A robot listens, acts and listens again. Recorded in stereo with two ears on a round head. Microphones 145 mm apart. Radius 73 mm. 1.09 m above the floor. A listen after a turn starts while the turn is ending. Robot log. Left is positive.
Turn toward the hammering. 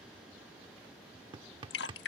note: The hammering: about 30° right or 150° right.
cmd yaw -30
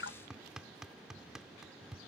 end: Facing the hammering.